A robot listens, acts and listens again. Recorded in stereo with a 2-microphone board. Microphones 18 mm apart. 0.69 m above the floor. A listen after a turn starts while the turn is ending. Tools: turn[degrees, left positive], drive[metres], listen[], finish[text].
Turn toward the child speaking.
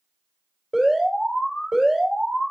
Action: listen[]
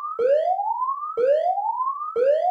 Action: listen[]
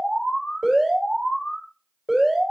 Action: finish[I can't make out a child speaking to turn to.]